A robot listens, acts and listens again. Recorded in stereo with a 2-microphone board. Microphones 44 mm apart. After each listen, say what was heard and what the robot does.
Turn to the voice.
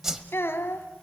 Turn 90° left.
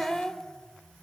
Found it: a child speaking, straight ahead, 1 to 2 m away.